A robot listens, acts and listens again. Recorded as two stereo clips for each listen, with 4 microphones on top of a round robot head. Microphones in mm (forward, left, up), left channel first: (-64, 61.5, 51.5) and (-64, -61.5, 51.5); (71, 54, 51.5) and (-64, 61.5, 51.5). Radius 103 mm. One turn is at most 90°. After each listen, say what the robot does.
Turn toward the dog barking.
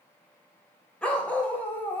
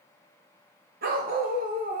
Turn 90° left.
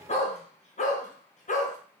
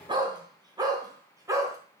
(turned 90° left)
Turn 90° left.
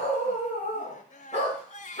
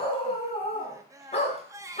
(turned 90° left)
Turn 35° left.
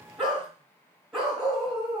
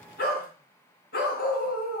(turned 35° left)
Found it: a dog barking, straight ahead, 2 to 4 m away.